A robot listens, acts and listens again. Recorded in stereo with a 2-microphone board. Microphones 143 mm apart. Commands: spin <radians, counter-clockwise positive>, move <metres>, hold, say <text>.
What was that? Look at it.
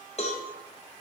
spin 0.87
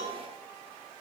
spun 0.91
hold
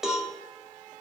say Found it: a cowbell, straight ahead.